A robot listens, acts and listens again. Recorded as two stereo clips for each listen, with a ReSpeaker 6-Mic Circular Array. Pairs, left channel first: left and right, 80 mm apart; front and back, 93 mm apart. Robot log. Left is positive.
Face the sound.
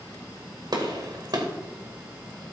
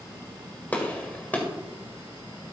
note: The gunshot: 70° right.
cmd yaw -70
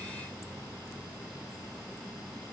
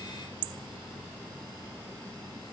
end: I heard a gunshot from this way, but can't make it out now.